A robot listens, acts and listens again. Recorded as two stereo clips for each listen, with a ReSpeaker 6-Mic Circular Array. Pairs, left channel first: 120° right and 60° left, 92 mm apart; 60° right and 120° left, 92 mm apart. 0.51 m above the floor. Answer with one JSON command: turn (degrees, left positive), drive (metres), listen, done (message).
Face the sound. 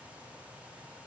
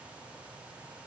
{"listen": true}
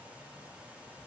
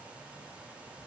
{"listen": true}
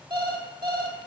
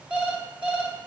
{"turn": 45}
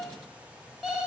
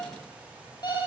{"turn": -25}
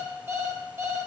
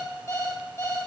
{"done": "Found it: an alarm clock, straight ahead, 1 to 2 m away."}